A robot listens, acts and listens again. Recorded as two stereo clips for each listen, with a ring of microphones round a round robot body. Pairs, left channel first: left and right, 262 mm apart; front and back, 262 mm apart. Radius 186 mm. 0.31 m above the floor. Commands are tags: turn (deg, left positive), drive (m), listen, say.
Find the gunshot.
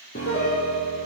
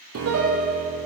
<listen/>
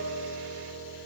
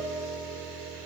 <listen/>
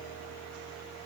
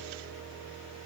<say>I can't make out a gunshot, only a piano.</say>